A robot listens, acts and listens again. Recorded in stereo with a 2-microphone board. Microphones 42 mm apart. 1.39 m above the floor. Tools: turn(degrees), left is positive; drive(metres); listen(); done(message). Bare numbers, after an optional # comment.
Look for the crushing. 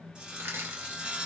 turn(-90)
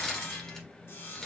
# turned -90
# So it is at 10° left.
turn(10)
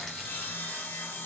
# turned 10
listen()
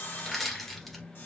done("Facing the crushing.")